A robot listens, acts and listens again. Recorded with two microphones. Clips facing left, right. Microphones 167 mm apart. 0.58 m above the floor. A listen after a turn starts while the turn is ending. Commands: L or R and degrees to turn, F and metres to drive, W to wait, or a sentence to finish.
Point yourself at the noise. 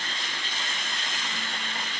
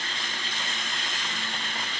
W
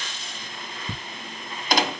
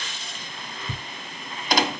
L35
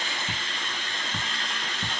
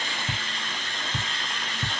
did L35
Facing the ticking.